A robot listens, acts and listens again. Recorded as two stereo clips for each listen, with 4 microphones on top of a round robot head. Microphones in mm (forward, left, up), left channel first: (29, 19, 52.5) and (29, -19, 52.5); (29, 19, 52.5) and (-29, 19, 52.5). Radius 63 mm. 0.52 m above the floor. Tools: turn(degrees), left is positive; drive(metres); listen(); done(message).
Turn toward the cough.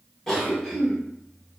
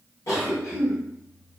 turn(degrees=10)
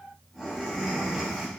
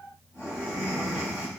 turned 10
done("Facing the cough.")